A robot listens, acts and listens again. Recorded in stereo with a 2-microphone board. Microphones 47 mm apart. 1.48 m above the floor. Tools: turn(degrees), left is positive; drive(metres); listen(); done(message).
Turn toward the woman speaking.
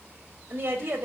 turn(degrees=-45)
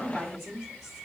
done("Found it: a woman speaking, straight ahead.")